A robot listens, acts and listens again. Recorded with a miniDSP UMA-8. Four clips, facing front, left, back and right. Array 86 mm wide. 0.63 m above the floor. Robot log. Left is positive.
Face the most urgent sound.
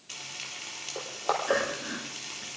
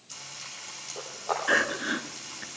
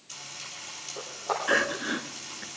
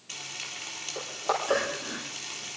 note: The crying: 125° left.
cmd yaw +125
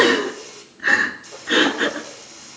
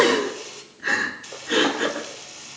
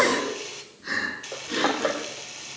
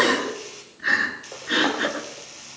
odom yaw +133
note: The crying is now 10° right.
cmd yaw -10
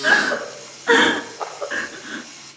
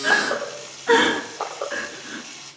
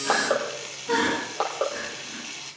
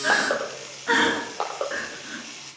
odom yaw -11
end: Facing the crying, 1 to 2 m away.